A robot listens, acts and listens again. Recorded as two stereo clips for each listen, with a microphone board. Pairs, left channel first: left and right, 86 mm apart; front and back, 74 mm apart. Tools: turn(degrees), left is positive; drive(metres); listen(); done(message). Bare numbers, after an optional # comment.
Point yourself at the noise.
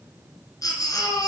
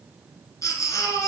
# The baby crying: 40° left.
turn(40)
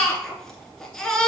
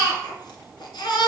done("Found it: a baby crying, straight ahead, 1 to 2 m away.")